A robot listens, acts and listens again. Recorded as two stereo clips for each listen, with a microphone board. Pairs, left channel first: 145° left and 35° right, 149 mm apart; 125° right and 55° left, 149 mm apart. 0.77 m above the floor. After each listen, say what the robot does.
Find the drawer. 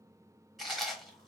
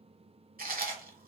Keep listening.
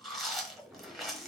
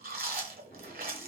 Turn 125° right.
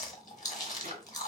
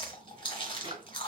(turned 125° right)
Found it: a drawer, straight ahead.